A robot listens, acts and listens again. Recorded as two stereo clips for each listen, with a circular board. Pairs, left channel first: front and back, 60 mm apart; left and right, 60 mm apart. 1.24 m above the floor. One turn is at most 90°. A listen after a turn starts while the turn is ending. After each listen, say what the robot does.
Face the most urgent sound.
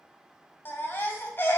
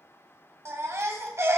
Turn 50° right.
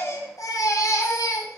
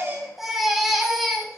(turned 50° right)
Found it: a baby crying, straight ahead.